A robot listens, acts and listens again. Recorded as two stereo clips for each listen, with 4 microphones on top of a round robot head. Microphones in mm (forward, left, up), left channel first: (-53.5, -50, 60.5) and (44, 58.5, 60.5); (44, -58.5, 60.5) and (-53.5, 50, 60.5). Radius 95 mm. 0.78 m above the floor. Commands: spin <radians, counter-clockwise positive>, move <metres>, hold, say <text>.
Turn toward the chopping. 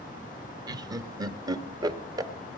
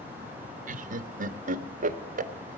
hold
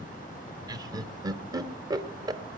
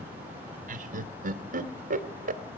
hold
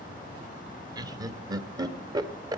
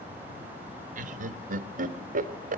say I can't make out chopping, only laughter.